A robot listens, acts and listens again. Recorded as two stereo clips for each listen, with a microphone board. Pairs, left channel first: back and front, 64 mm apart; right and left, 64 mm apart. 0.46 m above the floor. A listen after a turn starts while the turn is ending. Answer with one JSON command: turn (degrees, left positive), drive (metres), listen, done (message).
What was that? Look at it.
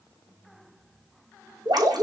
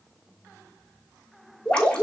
{"turn": -15}
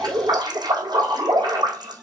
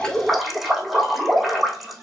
{"done": "Facing the dripping, over 4 m away."}